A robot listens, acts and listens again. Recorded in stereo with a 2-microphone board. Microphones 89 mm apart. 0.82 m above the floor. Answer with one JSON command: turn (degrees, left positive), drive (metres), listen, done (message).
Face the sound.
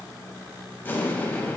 {"turn": 25}
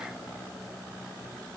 {"listen": true}
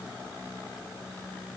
{"done": "I heard an explosion, but can't make it out now. It was about straight ahead or 130° left."}